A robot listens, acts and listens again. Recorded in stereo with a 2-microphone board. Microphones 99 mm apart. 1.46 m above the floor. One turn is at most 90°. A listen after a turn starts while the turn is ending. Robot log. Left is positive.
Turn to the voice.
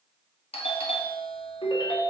cmd idle
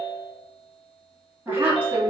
note: The woman speaking: about 25° right or 155° right.
cmd yaw -25
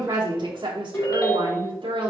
note: So it is at 115° right.
cmd yaw -90
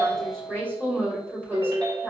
note: The woman speaking is now 25° right.
cmd yaw -25
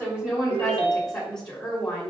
end: Facing the woman speaking, 2 to 4 m away.